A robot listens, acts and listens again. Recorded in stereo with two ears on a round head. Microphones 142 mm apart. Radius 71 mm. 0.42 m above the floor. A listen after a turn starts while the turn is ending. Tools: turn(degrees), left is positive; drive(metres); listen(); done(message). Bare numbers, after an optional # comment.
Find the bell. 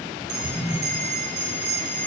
turn(-90)
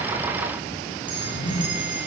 listen()
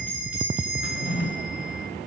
# The bell is now 10° right.
turn(-10)
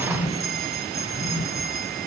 done("Facing the bell.")